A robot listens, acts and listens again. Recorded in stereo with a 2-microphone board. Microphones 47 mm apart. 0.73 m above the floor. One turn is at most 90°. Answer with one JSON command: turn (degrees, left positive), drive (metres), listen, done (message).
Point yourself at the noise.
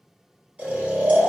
{"turn": -30}
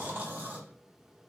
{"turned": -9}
{"turn": -40}
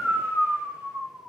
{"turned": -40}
{"turn": -90}
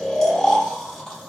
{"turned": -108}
{"turn": 10}
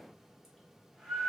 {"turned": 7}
{"done": "Found it: snoring, straight ahead."}